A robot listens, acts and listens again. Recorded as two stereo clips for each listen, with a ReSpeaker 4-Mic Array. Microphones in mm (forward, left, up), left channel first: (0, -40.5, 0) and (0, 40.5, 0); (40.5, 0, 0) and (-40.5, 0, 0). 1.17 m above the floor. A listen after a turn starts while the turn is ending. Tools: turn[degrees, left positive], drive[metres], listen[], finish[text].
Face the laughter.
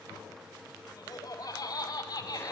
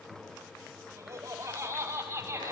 Thought: The laughter: 120° right.
Action: turn[-120]
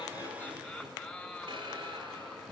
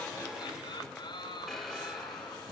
Action: finish[Facing the laughter, over 4 m away.]